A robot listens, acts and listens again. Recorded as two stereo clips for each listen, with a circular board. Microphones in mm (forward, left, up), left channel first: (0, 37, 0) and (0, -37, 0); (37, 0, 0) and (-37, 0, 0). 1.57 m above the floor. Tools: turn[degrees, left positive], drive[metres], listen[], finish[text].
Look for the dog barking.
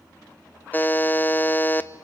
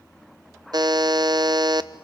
Action: listen[]
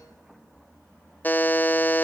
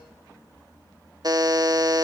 Action: listen[]
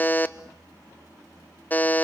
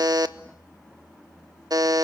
Action: finish[I can't make out a dog barking to turn to.]